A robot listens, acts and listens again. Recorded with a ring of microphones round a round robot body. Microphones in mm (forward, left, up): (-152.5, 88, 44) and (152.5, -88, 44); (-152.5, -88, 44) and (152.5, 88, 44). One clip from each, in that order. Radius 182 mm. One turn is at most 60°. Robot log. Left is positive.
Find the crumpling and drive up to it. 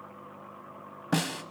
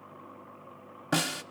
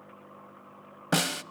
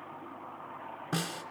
cmd idle
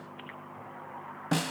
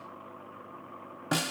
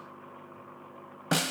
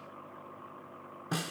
cmd idle
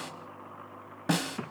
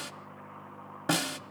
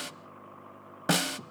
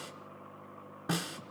end: I can't make out crumpling to turn to.